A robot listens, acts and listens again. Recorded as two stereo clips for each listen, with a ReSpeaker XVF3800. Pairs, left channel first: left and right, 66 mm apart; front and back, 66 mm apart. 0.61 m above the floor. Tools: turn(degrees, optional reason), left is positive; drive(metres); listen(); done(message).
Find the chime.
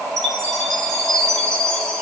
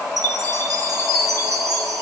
turn(degrees=165, reason="The chime: 165° left.")
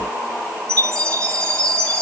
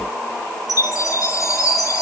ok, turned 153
turn(degrees=10, reason="The chime is now 10° left.")
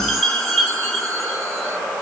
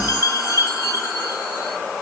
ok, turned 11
done("Found it: a chime, straight ahead.")